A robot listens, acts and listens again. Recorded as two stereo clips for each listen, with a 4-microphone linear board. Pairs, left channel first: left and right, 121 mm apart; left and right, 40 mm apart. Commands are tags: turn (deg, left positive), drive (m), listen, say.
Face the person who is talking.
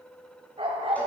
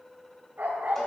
<listen/>
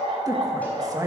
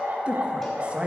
<turn deg="-30"/>
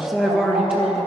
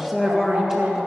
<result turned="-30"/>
<say>Found it: a woman speaking, straight ahead.</say>